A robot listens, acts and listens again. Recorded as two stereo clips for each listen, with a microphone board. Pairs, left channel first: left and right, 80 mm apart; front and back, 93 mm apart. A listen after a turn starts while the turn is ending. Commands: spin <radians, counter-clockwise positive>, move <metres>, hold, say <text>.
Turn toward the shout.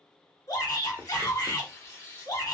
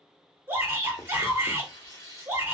spin 2.01
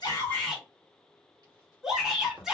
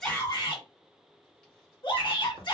say Found it: a shout, straight ahead.